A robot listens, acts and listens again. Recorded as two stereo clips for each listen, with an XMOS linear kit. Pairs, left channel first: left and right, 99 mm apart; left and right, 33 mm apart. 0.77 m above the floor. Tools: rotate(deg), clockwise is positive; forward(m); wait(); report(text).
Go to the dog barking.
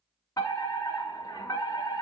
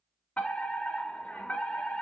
wait()
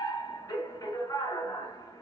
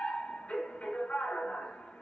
wait()
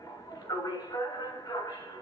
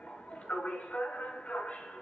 report("I can't make out a dog barking to turn to.")